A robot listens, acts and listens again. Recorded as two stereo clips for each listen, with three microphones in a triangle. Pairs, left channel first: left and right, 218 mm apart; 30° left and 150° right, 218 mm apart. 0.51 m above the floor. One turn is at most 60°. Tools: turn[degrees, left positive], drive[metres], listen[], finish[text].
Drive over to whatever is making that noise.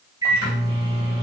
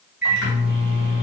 Thought: The microwave: 160° right.
Action: turn[-60]
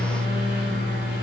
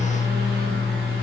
Thought: The microwave is now 115° right.
Action: turn[-60]
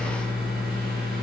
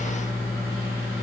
Thought: The microwave is now 50° right.
Action: turn[-50]
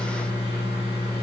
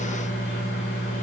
Thought: The microwave is now 15° right.
Action: turn[-15]
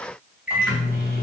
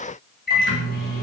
Action: drive[1.0]
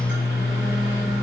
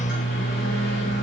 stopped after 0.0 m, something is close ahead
Action: finish[Blocked. The microwave is further on, straight ahead.]